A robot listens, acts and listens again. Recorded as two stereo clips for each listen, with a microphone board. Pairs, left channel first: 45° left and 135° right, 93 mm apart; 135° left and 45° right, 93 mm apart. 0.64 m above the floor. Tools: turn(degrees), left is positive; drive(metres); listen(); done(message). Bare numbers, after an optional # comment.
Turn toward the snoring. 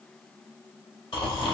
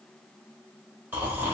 # The snoring: 20° left.
turn(20)
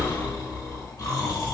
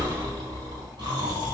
done("Facing the snoring.")